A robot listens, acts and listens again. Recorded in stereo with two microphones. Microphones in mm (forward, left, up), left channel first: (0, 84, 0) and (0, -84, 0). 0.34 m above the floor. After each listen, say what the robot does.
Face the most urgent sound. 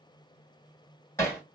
Keep listening.
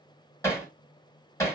Keep listening.
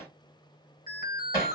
Turn 60° left.
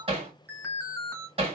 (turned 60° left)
Turn 20° left.
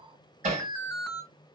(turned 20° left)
Found it: an alarm, straight ahead.